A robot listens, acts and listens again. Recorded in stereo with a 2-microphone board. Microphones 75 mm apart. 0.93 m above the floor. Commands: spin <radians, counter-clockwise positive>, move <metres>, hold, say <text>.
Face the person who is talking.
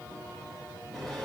hold
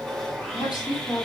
spin 1.22
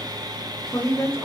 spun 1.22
spin 0.61
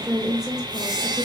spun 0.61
spin -0.17
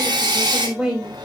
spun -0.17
say Facing the woman speaking.